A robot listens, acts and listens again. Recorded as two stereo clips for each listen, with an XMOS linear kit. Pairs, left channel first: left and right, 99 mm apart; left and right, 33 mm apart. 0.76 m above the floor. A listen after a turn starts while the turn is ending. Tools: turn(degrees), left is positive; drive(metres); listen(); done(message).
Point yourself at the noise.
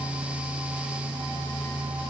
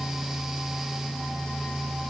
listen()
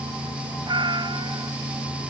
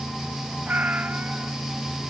turn(degrees=-45)
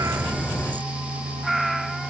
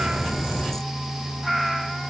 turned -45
done("Facing the cat meowing.")